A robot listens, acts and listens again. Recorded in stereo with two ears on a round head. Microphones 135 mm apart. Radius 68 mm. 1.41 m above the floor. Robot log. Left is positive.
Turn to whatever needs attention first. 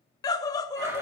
note: The scream: about 25° left or 155° left.
cmd yaw +25
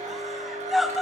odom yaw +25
end: Facing the scream, under 1 m away.